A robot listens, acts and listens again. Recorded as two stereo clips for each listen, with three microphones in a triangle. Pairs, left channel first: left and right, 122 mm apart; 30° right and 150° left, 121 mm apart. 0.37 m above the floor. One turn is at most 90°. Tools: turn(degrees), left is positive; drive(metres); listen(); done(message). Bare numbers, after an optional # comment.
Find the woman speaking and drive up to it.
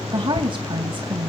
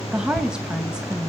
# The woman speaking: 130° right.
turn(-90)
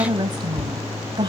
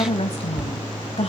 # The woman speaking is now 45° right.
turn(-45)
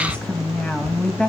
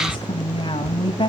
# The woman speaking is now 10° left.
turn(10)
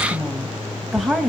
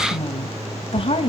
drive(1.0)
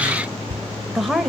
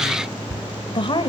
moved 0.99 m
drive(1.0)
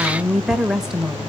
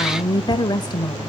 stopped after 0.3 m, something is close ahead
# The woman speaking is now 10° right.
turn(-10)
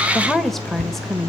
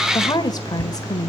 done("Arrived at the woman speaking, straight ahead.")